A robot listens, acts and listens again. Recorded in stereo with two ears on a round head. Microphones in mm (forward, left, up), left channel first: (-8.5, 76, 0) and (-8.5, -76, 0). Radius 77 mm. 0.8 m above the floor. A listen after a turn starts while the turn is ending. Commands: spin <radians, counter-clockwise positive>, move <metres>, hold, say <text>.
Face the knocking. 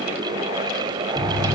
spin 0.52
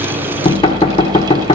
spin 2.53
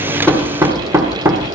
spin -0.26
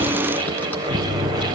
say Facing the knocking, 1 to 2 m away.